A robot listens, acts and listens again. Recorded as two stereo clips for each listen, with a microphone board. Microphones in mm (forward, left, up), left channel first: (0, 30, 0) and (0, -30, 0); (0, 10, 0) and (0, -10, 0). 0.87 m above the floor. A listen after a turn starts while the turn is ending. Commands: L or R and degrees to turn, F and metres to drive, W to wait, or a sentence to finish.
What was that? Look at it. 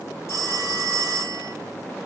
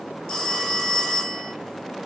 L45
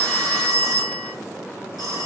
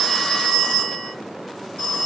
L90
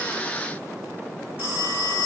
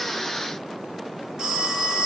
R35
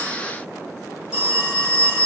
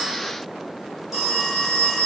R10
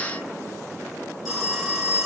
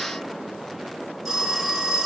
Found it: a phone ringing, straight ahead, 1 to 2 m away.